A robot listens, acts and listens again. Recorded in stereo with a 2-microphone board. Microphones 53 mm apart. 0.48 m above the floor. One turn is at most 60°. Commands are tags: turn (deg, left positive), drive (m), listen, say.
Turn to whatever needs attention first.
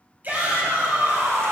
<turn deg="-35"/>
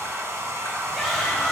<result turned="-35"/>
<say>Facing the shout, 2 to 4 m away.</say>